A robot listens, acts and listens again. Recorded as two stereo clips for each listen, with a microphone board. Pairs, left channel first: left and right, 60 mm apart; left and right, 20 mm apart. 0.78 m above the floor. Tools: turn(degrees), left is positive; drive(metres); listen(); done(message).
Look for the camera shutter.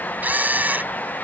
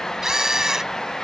turn(degrees=-30)
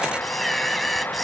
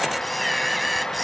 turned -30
done("Found it: a camera shutter, straight ahead.")